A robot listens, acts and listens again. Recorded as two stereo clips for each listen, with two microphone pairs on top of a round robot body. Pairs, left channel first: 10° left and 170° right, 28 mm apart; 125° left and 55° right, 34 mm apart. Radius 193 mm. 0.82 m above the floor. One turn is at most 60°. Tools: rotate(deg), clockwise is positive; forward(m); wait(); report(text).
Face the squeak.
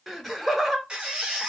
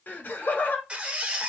rotate(60)
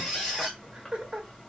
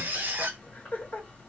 rotate(60)
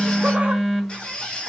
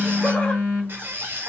rotate(45)
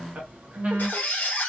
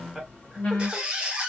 rotate(-10)
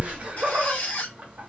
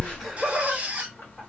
report("Found it: a squeak, straight ahead, 1 to 2 m away.")